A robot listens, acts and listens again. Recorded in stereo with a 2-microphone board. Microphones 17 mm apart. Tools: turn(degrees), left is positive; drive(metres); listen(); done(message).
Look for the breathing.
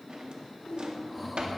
turn(degrees=30)
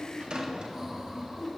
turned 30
turn(degrees=-30)
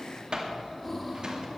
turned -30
turn(degrees=10)
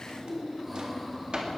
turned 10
done("Facing the breathing.")